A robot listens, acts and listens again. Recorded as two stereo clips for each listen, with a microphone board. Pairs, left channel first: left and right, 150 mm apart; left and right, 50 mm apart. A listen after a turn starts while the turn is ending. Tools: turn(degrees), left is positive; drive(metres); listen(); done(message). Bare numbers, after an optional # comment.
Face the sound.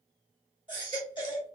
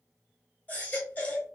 # The baby crying: about 30° left or 150° left.
turn(30)
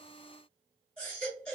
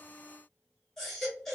# So it is at 10° left.
turn(10)
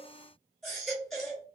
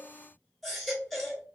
done("Found it: a baby crying, straight ahead.")